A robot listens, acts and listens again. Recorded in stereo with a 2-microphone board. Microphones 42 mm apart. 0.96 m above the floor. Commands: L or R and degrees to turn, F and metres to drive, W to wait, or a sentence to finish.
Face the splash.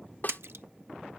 R90
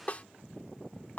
I heard a splash from this way, but can't make it out now.